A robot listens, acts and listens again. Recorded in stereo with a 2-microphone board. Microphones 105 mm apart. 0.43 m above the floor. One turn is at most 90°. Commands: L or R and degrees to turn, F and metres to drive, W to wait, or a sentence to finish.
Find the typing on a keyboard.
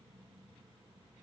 W
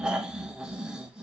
W
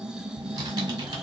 R40
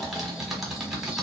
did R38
Found it: typing on a keyboard, straight ahead, 1 to 2 m away.